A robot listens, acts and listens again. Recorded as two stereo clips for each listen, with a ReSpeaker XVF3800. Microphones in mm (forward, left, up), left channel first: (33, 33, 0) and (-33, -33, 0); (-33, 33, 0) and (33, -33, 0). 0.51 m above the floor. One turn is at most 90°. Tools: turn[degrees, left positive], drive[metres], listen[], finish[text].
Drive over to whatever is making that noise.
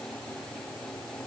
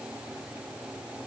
Action: listen[]
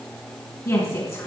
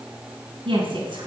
Thought: The woman speaking: 10° right.
Action: turn[-10]
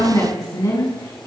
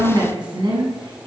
Action: drive[1.0]
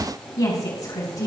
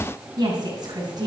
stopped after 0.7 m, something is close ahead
Action: finish[Blocked. The woman speaking is further on, straight ahead.]